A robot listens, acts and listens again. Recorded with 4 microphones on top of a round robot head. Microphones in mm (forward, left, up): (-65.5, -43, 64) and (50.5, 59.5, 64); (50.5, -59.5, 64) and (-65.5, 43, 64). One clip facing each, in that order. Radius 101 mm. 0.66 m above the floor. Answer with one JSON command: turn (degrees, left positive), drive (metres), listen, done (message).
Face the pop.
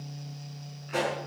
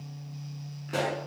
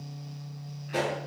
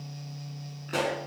{"turn": 100}
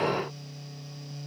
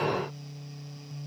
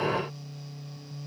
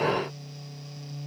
{"done": "Facing where the pop came from. I can't hear it now."}